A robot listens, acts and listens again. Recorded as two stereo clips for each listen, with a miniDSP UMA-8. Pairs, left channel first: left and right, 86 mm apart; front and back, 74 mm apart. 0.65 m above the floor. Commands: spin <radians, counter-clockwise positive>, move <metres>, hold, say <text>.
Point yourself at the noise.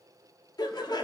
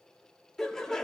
spin 1.40
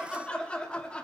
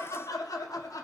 spin 0.26
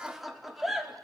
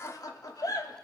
say Found it: laughter, straight ahead.